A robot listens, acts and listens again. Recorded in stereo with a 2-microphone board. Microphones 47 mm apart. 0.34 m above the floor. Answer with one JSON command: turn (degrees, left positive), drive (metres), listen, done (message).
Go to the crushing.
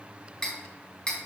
{"listen": true}
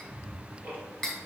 {"listen": true}
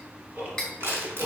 {"turn": -60}
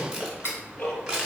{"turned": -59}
{"turn": -20}
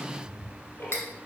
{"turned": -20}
{"listen": true}
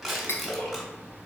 {"drive": 1.0}
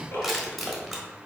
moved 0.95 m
{"drive": 1.0}
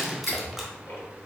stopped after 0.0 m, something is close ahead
{"listen": true}
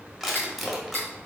{"done": "Arrived at the crushing, straight ahead."}